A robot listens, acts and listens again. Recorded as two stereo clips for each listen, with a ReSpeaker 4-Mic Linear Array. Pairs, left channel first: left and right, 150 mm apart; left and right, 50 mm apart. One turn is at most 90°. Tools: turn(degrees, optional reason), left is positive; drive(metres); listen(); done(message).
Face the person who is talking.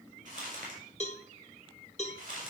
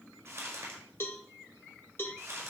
listen()
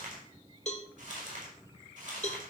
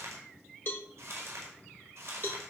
listen()
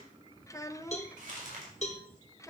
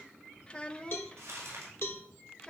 turn(degrees=20, reason="The child speaking: about 20° left or 160° left.")
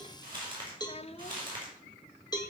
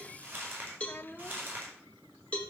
turn(degrees=90, reason="So it is at 135° left.")
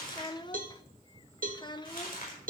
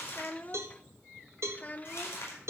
turn(degrees=30, reason="The child speaking is now 30° left.")
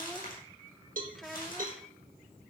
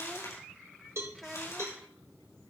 done("Found it: a child speaking, straight ahead.")